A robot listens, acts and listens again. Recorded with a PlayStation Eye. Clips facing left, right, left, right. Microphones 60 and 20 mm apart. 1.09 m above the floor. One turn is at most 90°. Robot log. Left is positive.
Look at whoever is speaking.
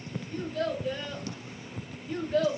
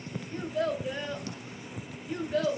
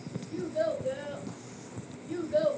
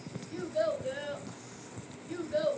cmd yaw +30
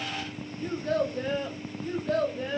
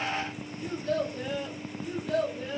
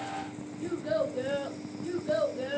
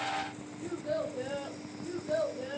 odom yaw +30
note: So it is at 130° left.
cmd yaw +90
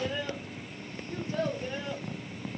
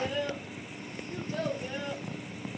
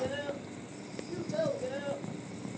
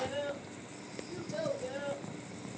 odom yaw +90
note: The child speaking is now 10° left.
cmd yaw +10
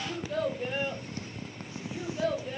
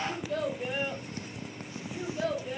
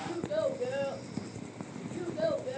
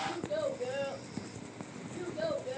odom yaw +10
end: Facing the child speaking.